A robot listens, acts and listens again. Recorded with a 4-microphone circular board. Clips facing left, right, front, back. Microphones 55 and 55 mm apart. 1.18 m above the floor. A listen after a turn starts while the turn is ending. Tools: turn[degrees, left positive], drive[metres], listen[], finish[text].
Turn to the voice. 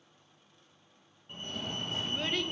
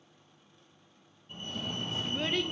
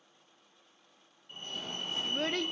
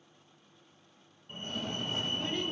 Action: finish[Facing the child speaking, under 1 m away.]